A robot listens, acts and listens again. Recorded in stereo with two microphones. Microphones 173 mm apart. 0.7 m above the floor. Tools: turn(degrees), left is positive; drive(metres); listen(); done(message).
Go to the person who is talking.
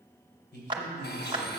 turn(degrees=70)
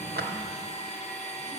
listen()
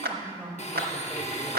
turn(degrees=10)
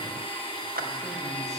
listen()
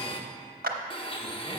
listen()
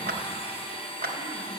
done("Facing where the man speaking came from. I can't hear it now. I did not reach it.")